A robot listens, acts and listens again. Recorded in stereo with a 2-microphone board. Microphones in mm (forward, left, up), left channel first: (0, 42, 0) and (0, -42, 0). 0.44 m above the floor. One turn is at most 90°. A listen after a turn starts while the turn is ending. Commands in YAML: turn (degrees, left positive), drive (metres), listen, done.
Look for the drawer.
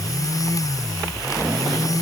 listen: true
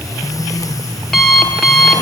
listen: true
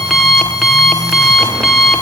done: "I can't make out a drawer to turn to."